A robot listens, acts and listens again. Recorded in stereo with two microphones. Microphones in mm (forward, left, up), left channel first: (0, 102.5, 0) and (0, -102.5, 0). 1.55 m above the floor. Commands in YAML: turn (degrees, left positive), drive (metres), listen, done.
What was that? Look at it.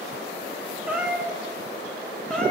turn: 30
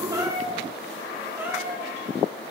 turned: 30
turn: -10
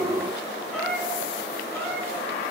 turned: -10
done: "Found it: a cat meowing, straight ahead, 2 to 4 m away."